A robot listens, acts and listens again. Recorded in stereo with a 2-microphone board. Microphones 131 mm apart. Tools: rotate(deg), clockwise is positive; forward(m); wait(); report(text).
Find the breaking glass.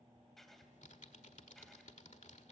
wait()
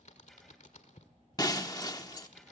rotate(-30)
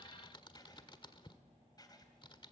wait()
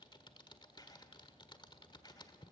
report("I heard breaking glass, but can't make it out now. It was about straight ahead or 120° left.")